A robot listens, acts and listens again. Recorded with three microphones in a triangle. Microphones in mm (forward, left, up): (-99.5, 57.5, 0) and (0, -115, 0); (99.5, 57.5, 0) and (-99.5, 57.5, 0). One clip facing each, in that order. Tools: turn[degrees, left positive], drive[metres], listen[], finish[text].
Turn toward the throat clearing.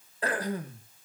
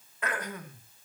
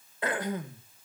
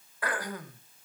Thought: The throat clearing: 65° left.
Action: turn[65]
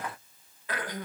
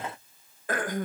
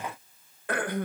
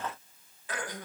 Thought: The throat clearing is now 25° right.
Action: turn[-25]
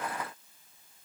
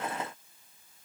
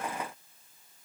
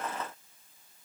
Action: listen[]
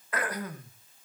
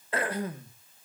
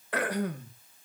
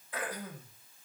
Action: finish[Found it: throat clearing, straight ahead, 2 to 4 m away.]